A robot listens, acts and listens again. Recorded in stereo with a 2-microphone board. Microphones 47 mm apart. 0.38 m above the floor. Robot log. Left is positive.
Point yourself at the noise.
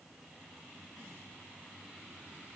cmd idle
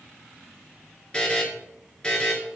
note: The buzzer: about 20° left or 160° left.
cmd yaw +20
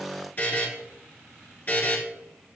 note: So it is at 140° left.
cmd yaw +140
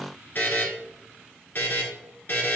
note: The buzzer is now 45° left.
cmd yaw +45
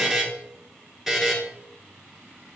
end: Facing the buzzer.